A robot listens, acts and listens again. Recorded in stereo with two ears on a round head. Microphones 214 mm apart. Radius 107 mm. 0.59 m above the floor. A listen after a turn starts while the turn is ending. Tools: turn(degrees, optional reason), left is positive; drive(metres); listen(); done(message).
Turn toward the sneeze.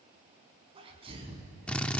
turn(degrees=-25, reason="The sneeze: about 25° right or 155° right.")
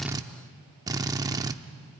listen()
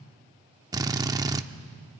done("I heard a sneeze, but can't make it out now. It was about straight ahead or 130° right.")